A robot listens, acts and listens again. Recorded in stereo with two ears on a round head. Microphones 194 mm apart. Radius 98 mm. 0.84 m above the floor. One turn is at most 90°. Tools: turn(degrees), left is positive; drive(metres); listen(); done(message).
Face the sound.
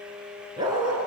turn(degrees=-20)
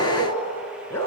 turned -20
turn(degrees=10)
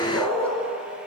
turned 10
done("Facing the dog barking.")